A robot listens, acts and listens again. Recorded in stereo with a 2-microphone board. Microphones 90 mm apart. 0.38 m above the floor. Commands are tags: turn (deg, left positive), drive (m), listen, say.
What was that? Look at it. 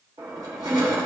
<turn deg="-50"/>
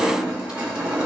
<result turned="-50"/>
<turn deg="-10"/>
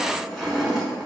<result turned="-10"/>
<say>Facing the crushing.</say>